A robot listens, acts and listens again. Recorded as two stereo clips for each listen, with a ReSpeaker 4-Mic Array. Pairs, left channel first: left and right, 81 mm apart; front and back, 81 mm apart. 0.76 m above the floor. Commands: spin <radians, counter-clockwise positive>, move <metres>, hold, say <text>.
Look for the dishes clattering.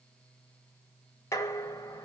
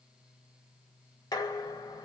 spin 0.61
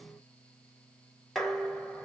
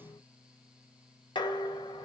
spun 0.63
say Facing the dishes clattering.